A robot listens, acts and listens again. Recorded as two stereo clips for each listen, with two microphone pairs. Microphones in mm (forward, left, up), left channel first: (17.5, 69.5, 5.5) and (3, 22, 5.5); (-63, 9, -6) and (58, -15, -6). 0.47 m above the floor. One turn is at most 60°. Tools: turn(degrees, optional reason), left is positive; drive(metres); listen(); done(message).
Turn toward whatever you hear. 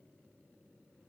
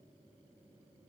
listen()
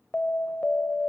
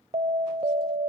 turn(degrees=15, reason="The alarm: 15° left.")
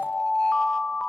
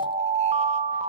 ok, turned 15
done("Facing the alarm.")